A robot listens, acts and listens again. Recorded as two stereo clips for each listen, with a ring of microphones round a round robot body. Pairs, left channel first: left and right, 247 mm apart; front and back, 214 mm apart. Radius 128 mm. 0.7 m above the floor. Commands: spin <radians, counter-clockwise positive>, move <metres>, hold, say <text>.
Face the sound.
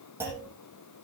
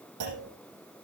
spin -2.97
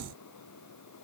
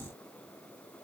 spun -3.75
spin 0.79
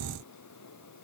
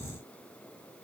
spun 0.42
spin 0.35
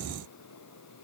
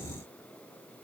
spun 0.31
say I heard a clunk from this way, but can't make it out now.